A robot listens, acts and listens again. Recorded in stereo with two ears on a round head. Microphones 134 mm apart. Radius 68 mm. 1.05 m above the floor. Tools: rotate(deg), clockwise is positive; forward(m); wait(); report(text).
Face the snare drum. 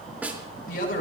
rotate(30)
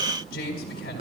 rotate(140)
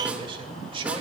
wait()
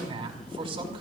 wait()
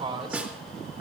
rotate(10)
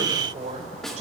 report("Facing the snare drum, 2 to 4 m away.")